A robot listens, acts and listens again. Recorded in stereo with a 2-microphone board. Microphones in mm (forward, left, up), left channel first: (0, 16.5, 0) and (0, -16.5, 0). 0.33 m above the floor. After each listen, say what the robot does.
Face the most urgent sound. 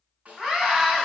Turn 20° right.
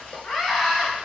Found it: a scream, straight ahead.